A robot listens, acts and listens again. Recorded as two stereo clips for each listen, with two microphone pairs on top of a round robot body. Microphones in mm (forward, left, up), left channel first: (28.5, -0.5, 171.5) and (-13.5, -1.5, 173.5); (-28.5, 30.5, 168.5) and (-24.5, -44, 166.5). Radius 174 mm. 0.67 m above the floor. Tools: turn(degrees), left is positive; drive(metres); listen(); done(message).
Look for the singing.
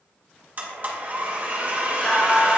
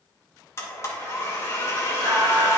turn(degrees=-65)
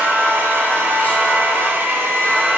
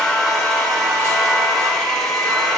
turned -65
turn(degrees=-40)
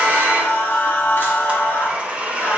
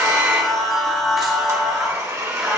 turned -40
done("Facing the singing, 2 to 4 m away.")